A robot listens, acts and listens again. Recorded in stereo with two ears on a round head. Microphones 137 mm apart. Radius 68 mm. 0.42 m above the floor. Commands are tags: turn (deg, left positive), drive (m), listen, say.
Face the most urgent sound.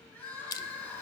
<turn deg="30"/>
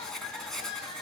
<turn deg="140"/>
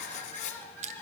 <turn deg="15"/>
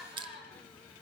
<say>Facing the crying, over 4 m away.</say>